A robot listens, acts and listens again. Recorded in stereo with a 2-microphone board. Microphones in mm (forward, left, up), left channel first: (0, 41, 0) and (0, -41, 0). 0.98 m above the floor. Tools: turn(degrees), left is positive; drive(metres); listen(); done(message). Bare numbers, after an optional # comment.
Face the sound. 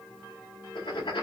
turn(90)
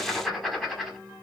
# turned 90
done("Facing the writing, 1 to 2 m away.")